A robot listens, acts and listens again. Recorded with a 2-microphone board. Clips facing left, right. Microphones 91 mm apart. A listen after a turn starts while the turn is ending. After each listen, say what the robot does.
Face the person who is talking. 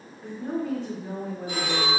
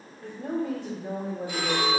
Turn 65° right.
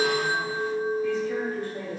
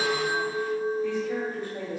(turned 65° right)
Turn 20° right.
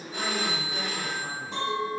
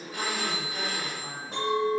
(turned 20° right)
Keep listening.
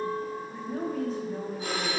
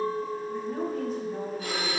Facing the woman speaking, 1 to 2 m away.